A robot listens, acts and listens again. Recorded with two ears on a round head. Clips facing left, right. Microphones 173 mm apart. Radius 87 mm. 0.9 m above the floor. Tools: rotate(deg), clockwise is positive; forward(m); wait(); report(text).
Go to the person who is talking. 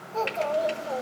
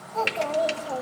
rotate(-40)
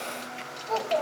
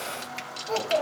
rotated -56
rotate(15)
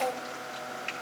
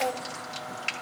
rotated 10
wait()
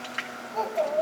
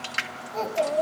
forward(1.0)
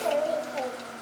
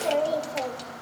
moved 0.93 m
rotate(10)
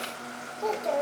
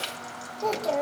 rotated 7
forward(1.0)
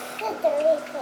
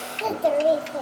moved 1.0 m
rotate(10)
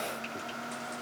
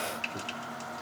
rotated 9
wait()
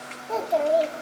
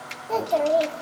forward(1.0)
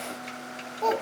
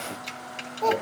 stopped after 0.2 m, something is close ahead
report("Arrived at the child speaking, straight ahead.")